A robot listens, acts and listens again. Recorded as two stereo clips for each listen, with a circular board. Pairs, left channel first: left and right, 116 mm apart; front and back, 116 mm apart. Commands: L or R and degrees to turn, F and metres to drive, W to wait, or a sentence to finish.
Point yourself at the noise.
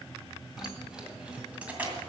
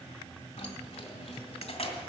R15
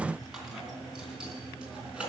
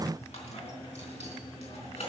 R10
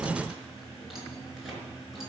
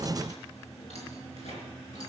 Found it: keys jangling, straight ahead.